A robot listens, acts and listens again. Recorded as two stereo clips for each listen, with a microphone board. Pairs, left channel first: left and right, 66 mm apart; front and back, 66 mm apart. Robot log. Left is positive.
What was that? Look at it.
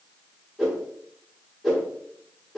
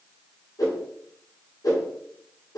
end: Found it: a whoosh, straight ahead, 1 to 2 m away.